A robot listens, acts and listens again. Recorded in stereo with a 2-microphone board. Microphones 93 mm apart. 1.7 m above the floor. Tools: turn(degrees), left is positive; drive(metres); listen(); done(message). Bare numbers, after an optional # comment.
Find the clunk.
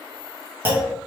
# The clunk: about 25° right or 155° right.
turn(-25)
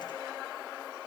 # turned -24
listen()
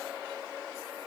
done("I heard a clunk, but can't make it out now. It was about straight ahead or 130° right.")